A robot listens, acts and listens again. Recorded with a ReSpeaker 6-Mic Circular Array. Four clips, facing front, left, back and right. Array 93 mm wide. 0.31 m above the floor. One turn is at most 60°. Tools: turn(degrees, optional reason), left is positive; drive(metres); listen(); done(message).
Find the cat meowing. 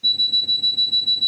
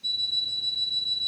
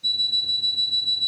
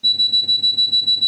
listen()
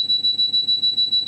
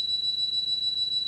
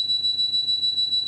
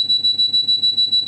listen()
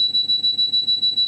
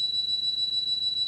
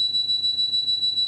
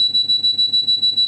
done("I can't make out a cat meowing to turn to.")